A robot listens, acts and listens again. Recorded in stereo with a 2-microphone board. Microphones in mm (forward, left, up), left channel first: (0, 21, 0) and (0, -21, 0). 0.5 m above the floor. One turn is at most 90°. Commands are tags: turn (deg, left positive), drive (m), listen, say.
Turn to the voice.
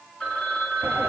<listen/>
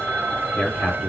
<turn deg="40"/>
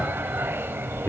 <listen/>
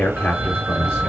<turn deg="90"/>
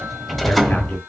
<turn deg="10"/>
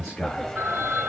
<turn deg="15"/>
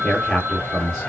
<say>Facing the man speaking.</say>